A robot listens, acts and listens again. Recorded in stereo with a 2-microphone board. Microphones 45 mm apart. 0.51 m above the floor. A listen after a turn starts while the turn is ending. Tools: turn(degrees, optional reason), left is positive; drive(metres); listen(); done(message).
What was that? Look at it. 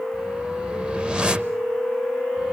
turn(degrees=-20, reason="The whoosh: about 20° right or 160° right.")
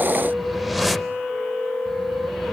done("Facing the whoosh, under 1 m away.")